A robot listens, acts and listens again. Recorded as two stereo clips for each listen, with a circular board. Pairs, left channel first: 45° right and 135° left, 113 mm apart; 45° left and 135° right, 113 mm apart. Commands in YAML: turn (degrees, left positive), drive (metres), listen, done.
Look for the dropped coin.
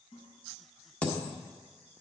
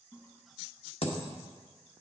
turn: 30
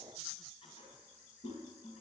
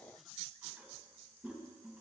done: "Facing where the dropped coin came from. I can't hear it now."